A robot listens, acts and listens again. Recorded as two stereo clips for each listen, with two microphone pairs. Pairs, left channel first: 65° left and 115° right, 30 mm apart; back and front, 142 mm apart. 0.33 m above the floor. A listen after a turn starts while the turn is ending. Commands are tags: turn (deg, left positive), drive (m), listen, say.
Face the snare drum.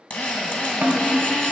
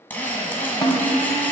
<turn deg="-130"/>
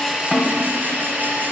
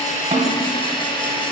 <listen/>
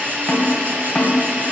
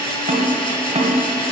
<say>Facing the snare drum.</say>